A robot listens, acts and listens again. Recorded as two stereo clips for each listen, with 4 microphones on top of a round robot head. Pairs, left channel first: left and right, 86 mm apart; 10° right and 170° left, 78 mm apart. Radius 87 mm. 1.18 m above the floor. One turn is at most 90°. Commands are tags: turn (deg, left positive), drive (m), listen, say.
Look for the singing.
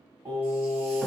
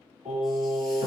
<turn deg="-90"/>
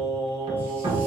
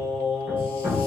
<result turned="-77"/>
<turn deg="-30"/>
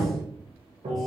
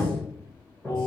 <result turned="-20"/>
<turn deg="10"/>
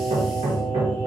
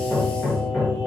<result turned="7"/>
<turn deg="15"/>
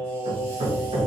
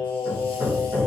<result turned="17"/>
<turn deg="10"/>
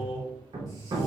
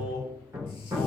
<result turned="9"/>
<say>Found it: singing, straight ahead, 2 to 4 m away.</say>